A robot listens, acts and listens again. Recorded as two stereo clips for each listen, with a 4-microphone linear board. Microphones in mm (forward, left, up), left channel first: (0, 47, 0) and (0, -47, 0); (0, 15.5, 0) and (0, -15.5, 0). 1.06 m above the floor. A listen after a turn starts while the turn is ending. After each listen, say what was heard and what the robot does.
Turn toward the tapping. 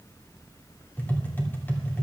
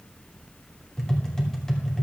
The tapping: about 20° left or 160° left. Turn 20° left.
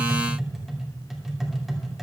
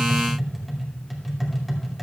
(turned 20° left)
Found it: tapping, straight ahead.